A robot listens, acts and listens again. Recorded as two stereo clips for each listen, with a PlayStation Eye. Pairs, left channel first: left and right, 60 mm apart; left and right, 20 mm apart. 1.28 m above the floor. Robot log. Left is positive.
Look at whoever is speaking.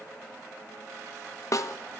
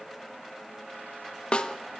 cmd idle
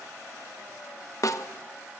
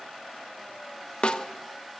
cmd idle
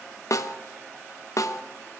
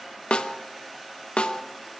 end: I can't make out anyone speaking to turn to.